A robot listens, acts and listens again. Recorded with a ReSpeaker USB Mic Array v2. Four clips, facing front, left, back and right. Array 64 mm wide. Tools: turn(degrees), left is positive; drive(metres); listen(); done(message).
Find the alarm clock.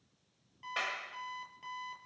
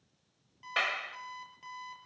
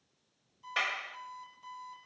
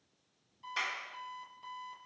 turn(degrees=25)
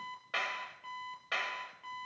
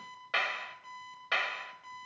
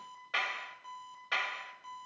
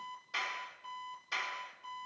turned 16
turn(degrees=10)
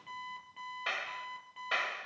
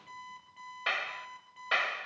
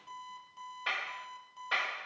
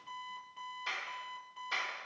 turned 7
done("Found it: an alarm clock, straight ahead, over 4 m away.")